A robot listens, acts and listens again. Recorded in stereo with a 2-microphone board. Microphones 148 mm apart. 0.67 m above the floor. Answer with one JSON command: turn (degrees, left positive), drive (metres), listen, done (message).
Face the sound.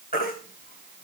{"turn": 90}
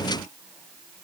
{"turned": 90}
{"listen": true}
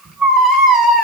{"done": "Facing the baby crying, 1 to 2 m away."}